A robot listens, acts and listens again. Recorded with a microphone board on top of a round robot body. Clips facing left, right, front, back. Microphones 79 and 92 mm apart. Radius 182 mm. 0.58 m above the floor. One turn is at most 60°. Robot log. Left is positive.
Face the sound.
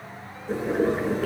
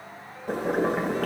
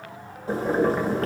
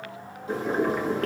note: The boiling: 55° right.
cmd yaw -55
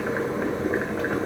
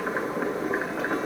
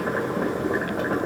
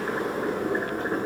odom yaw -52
end: Found it: boiling, straight ahead.